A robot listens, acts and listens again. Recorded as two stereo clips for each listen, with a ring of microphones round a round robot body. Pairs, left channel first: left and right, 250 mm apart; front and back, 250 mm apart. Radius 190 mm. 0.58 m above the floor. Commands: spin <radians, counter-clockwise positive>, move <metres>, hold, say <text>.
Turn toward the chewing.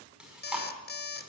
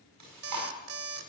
spin -3.05
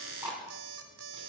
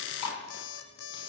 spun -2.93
spin -0.17
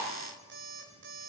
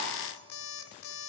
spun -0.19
hold
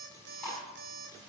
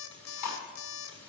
say Facing the chewing, over 4 m away.